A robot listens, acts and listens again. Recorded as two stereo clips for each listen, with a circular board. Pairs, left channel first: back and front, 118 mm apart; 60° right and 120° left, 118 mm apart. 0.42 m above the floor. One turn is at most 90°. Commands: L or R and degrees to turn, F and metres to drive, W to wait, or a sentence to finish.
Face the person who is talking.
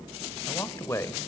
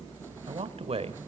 L90
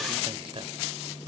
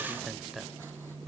L30
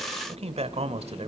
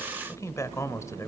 Found it: a man speaking, straight ahead.